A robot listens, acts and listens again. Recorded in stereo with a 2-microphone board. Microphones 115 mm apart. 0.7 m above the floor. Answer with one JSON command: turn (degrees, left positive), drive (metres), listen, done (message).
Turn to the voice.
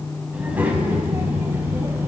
{"turn": -25}
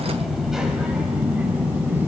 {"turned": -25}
{"turn": -20}
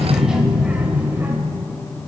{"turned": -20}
{"turn": -20}
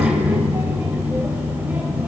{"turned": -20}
{"turn": -20}
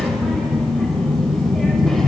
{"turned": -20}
{"done": "Facing the child speaking."}